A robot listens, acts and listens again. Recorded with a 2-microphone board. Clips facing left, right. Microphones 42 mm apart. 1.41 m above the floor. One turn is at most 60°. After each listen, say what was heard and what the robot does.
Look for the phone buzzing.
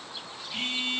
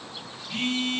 The phone buzzing: about 70° right or 110° right. Turn 60° right.
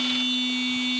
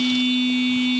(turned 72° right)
So it is at 35° right. Turn 35° right.
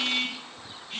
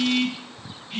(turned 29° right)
Facing the phone buzzing.